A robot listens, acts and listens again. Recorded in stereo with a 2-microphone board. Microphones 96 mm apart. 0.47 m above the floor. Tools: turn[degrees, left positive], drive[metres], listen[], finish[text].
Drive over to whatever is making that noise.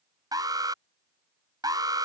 Thought: The alarm: about 40° right or 140° right.
Action: turn[-40]
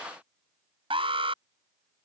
Thought: So it is at 95° right.
Action: turn[-95]
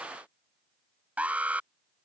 Thought: The alarm is now 15° right.
Action: turn[-15]
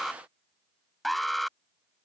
Action: drive[1.0]
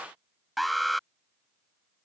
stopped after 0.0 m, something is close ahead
Action: finish[Something is in my way. I am facing the alarm but have not reached it.]